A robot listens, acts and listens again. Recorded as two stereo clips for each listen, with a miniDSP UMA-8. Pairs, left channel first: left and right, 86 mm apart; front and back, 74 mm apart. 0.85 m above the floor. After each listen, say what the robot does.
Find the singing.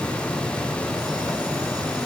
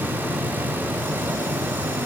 Keep listening.
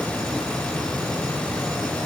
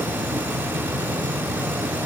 Keep listening.
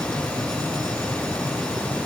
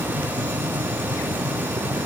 I can't make out singing to turn to.